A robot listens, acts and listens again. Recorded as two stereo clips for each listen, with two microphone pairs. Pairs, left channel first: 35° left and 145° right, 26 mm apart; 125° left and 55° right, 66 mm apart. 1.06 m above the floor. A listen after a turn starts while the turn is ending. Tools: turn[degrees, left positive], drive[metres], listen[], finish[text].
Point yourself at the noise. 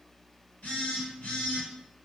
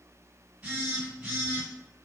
Thought: The phone buzzing: 15° left.
Action: turn[15]
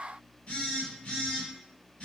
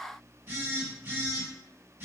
Action: finish[Found it: a phone buzzing, straight ahead.]